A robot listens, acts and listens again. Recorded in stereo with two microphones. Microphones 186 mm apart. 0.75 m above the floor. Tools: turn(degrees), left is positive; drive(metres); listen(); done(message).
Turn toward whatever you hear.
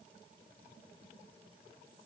listen()
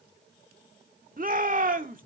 turn(degrees=-50)
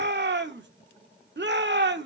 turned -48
turn(degrees=-80)
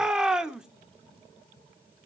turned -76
done("Found it: a shout, straight ahead, 1 to 2 m away.")